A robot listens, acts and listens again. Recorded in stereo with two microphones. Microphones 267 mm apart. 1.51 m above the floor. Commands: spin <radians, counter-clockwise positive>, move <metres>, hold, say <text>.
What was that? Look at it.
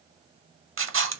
spin -0.87
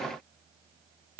hold
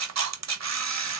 spin -1.40
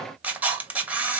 say Found it: a camera shutter, straight ahead, under 1 m away.